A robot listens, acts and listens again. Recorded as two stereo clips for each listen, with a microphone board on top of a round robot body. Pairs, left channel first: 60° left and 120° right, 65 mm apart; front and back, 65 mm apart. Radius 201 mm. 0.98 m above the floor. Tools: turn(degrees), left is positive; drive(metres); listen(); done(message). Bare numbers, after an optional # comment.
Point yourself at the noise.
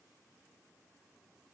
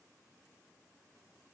listen()
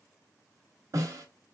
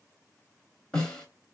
# The snare drum: 75° right.
turn(-75)
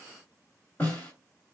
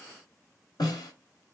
done("Facing the snare drum.")